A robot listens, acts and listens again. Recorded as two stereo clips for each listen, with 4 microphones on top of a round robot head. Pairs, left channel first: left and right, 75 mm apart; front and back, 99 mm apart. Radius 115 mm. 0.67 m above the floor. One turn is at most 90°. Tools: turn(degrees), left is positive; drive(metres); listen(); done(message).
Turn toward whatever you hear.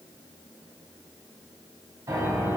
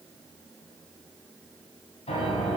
turn(degrees=-35)
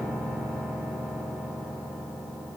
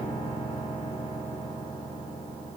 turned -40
done("Facing the piano.")